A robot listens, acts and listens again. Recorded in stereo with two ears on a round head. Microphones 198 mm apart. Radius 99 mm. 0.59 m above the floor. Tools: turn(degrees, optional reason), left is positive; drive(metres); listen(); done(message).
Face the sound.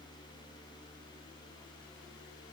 listen()
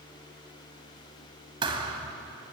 turn(degrees=-25, reason="The thud: about 25° right or 155° right.")
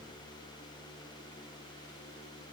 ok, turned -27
listen()
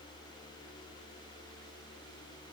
done("I heard a thud, but can't make it out now. It was about 5° left or 130° right.")